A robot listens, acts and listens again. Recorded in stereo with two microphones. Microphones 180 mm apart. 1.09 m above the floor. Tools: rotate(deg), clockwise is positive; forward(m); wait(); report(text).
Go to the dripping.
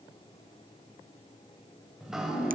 rotate(30)
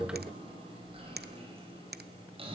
rotate(150)
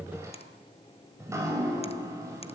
rotate(15)
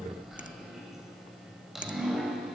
forward(1.0)
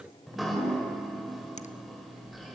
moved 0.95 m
forward(1.0)
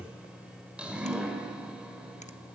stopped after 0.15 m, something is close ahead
report("Something is in my way. I am facing the dripping but have not reached it.")